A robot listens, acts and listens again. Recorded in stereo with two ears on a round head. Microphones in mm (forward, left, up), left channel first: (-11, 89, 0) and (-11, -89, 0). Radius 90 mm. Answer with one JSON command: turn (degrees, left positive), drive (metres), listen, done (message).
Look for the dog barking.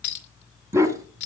{"turn": -15}
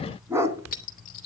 {"turn": -30}
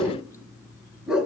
{"turn": -30}
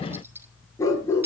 {"turn": 15}
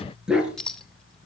{"done": "Found it: a dog barking, straight ahead."}